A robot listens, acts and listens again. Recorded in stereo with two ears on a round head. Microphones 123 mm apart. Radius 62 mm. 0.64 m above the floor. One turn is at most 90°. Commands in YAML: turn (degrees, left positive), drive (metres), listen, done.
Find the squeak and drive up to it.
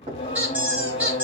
turn: -30
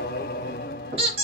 turn: -90
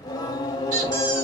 turn: -60
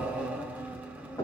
listen: true
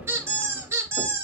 turn: -20
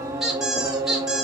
drive: 1.0
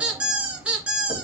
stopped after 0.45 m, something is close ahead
turn: -10
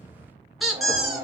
done: "Something is in my way. I am facing the squeak but have not reached it."